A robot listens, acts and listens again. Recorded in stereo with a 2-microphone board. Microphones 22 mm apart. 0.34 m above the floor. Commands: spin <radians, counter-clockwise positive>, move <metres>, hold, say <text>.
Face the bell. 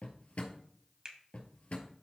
hold
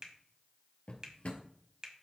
hold
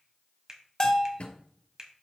spin 0.61
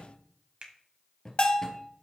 spin 1.75
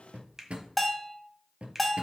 say Facing the bell, 1 to 2 m away.